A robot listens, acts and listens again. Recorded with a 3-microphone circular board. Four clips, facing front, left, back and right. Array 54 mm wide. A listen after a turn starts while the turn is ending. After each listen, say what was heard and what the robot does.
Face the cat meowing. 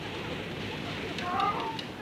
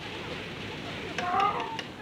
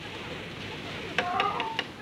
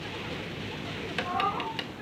The cat meowing: 100° left. Turn 100° left.
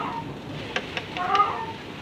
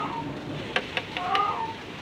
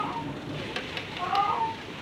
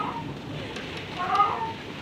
The cat meowing is now 30° right. Turn 30° right.
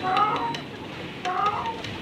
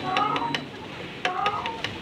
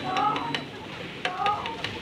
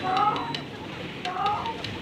The cat meowing is now 10° left. Turn 10° left.
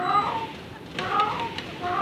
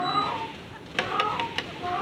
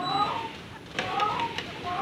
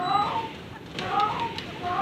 Facing the cat meowing, over 4 m away.